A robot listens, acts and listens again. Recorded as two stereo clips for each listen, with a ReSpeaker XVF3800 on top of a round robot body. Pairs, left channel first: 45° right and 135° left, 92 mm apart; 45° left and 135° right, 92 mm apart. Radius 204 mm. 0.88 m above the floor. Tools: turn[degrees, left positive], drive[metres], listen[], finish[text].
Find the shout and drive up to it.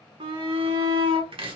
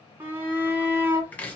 Thought: The shout: 160° left.
Action: turn[160]
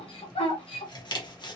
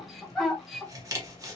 Thought: The shout is now 45° right.
Action: turn[-45]
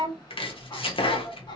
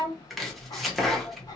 Action: drive[1.0]
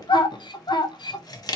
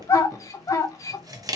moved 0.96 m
Thought: The shout is now 10° right.
Action: turn[-10]
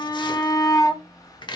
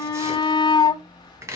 Action: drive[1.0]
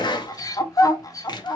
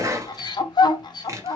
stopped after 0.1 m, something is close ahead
Action: finish[Arrived at the shout, straight ahead.]